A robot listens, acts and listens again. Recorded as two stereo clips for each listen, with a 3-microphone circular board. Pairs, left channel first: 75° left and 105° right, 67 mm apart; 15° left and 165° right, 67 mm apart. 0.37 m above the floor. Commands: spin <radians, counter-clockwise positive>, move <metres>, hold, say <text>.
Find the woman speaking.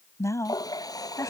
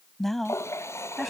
spin 1.75
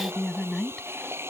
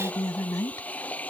spin -0.17
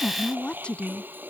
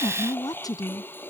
say Found it: a woman speaking, straight ahead.